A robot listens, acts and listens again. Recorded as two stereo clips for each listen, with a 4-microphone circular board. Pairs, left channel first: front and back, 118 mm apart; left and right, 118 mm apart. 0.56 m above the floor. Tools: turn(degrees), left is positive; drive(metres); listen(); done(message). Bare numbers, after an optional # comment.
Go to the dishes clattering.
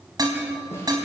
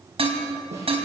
# The dishes clattering: 125° right.
turn(-125)
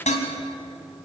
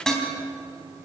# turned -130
drive(1.0)
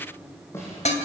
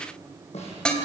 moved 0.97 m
# The dishes clattering is now 10° left.
turn(10)
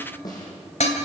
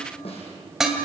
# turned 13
drive(1.0)
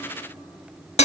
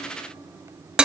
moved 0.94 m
# The dishes clattering is now 10° right.
turn(-10)
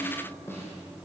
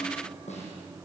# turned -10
listen()
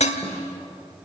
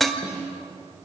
drive(1.0)
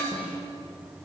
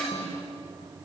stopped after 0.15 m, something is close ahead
listen()
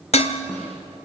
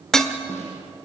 done("Arrived at the dishes clattering, straight ahead.")